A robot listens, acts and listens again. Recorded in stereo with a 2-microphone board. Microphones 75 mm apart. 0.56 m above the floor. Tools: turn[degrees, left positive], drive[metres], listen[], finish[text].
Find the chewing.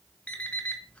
Action: listen[]
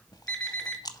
Thought: The chewing: about 70° left or 110° left.
Action: turn[70]
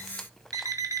Action: listen[]
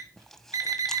Action: listen[]
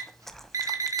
Action: finish[I heard chewing, but can't make it out now. It was about straight ahead or 40° left.]